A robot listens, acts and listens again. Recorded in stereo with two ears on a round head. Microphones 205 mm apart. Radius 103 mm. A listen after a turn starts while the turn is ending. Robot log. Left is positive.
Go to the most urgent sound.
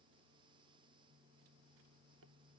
cmd idle
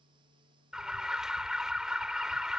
cmd yaw -30
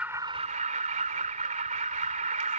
note: So it is at 145° right.
cmd yaw -145
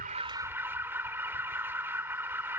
note: The alarm is now 10° right.
cmd yaw -10
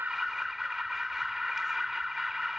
cmd fwd 1.0
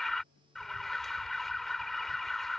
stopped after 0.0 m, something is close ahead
end: Something is in my way. I am facing the alarm but have not reached it.